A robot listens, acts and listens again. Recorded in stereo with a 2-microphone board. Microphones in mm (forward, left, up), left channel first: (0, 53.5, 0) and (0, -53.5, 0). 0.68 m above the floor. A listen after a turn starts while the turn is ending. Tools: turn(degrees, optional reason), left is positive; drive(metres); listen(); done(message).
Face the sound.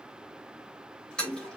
turn(degrees=30)
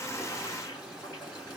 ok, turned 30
turn(degrees=140, reason="So it is at 140° left.")
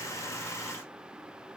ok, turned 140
listen()
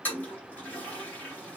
turn(degrees=15, reason="The toilet flushing is now 15° left.")
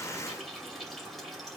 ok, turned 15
done("Facing the toilet flushing, 2 to 4 m away.")